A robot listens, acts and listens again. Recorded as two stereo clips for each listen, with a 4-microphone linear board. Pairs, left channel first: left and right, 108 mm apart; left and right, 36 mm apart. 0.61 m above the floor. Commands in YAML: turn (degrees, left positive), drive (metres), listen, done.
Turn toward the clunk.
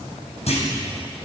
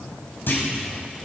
turn: 90
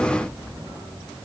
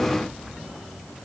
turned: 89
done: "I heard a clunk from this way, but can't make it out now."